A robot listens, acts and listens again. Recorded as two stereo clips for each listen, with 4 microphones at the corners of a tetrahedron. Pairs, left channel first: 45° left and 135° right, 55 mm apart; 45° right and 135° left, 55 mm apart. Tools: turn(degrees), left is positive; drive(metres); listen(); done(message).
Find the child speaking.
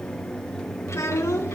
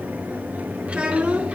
turn(degrees=70)
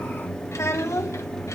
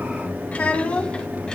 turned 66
turn(degrees=25)
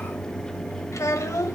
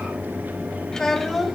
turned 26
turn(degrees=45)
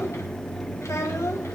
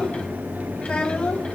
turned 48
turn(degrees=25)
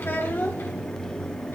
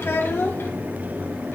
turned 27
done("Facing the child speaking.")